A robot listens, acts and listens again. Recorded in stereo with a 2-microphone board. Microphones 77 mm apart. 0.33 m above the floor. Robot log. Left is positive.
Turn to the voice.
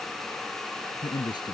cmd yaw +90
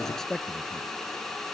end: Facing the man speaking.